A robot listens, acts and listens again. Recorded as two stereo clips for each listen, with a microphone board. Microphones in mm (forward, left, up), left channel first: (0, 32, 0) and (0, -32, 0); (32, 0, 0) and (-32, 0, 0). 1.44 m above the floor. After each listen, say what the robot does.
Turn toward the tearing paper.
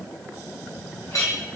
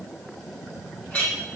Keep listening.
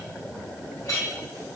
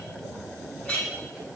Keep listening.
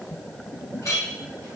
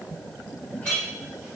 I can't make out tearing paper to turn to.